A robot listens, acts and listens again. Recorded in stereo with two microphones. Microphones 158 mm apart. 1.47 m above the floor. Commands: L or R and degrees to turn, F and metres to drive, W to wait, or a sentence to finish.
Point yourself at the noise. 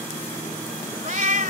R55
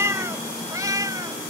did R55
R20
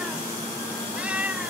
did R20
R10
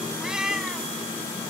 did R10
Found it: a cat meowing, straight ahead.